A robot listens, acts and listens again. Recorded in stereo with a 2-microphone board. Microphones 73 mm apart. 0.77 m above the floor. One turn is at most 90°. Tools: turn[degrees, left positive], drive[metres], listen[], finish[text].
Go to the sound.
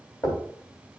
Thought: The knocking: about 45° left or 135° left.
Action: turn[45]
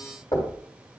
Thought: So it is at 85° left.
Action: turn[85]
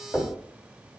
Action: drive[1.0]
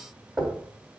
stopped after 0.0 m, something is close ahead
Action: finish[Something is in my way. I am facing the knocking but have not reached it.]